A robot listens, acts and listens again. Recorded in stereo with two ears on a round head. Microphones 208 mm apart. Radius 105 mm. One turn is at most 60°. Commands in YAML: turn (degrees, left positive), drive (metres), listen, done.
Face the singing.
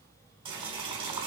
listen: true
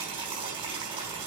listen: true
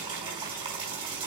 done: "I can't make out singing, only boiling."